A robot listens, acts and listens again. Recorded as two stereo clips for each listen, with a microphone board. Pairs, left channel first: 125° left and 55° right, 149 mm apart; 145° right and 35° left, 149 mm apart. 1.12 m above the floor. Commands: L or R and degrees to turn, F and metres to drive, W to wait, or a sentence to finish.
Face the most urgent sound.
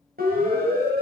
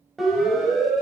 R55
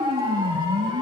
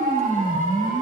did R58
Facing the siren, over 4 m away.